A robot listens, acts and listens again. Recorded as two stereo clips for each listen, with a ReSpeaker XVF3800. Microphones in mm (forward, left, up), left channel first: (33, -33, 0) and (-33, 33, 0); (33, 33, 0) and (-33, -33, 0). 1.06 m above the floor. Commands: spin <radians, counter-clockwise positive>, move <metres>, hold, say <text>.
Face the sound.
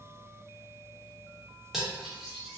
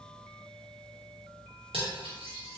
spin -2.44
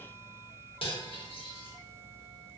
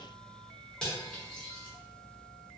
spin -0.61
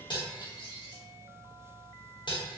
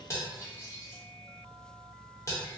spin -0.26
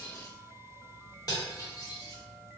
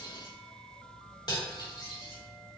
say Facing the cutlery clinking, under 1 m away.